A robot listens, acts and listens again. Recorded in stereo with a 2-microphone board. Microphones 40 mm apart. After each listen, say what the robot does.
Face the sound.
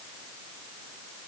Keep listening.
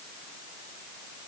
Keep listening.
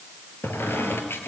Turn 70° left.
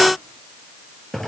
Found it: a squeak, straight ahead.